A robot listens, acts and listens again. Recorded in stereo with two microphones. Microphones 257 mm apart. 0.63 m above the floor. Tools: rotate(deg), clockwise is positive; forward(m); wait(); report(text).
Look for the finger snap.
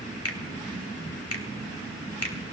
rotate(-65)
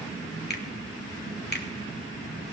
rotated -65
rotate(-40)
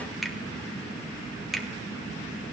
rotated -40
report("Facing the finger snap.")